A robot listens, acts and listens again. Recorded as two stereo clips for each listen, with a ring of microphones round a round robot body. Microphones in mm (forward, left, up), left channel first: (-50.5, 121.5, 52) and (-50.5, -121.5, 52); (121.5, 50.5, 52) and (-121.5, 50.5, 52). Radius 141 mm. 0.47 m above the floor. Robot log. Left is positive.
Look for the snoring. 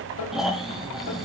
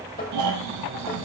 note: The snoring: straight behind.
cmd yaw +180
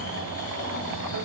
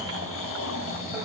note: The snoring is now 30° left.
cmd yaw +30
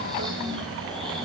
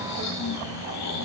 end: Found it: snoring, straight ahead.